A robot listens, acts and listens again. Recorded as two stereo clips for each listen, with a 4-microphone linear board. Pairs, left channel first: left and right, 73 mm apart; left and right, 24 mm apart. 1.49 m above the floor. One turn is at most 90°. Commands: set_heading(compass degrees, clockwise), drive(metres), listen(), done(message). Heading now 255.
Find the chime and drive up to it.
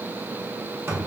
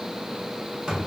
listen()
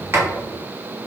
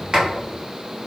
listen()
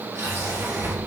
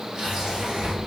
done("I can't make out a chime, only a sliding door.")